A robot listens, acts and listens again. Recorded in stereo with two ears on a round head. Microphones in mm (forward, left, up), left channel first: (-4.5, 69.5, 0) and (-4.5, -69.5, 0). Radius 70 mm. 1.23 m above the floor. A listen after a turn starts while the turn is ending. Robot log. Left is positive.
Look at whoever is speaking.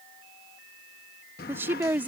cmd yaw -30
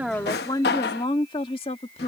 note: So it is at 40° left.
cmd yaw +40
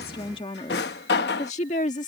note: The woman speaking is now 50° left.
cmd yaw +50
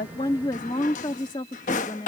note: The woman speaking is now 30° left.
cmd yaw +30
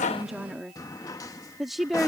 end: Found it: a woman speaking, straight ahead.